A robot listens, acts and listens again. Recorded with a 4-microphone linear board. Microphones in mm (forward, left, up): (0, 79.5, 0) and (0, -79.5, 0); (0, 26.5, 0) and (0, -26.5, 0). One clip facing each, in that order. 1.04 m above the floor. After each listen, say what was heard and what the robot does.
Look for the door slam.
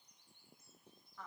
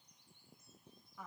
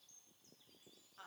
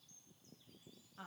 Keep listening.
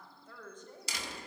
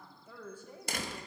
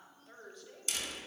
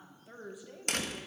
The door slam: about 55° right or 125° right. Turn 55° right.
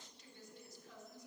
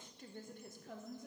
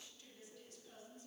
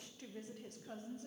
Keep listening.
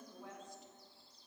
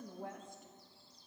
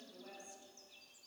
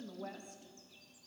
I heard a door slam, but can't make it out now. It was about straight ahead or 70° right.